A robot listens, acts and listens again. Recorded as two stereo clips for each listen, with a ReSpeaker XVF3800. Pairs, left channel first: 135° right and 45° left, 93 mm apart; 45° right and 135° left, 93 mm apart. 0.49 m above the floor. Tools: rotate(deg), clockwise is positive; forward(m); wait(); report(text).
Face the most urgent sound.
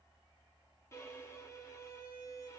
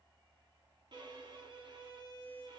wait()
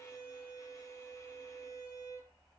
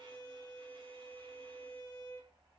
wait()
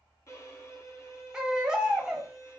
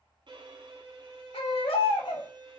rotate(40)
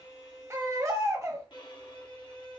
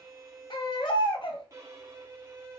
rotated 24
rotate(15)
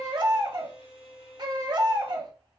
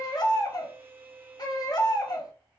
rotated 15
report("Found it: a baby crying, straight ahead.")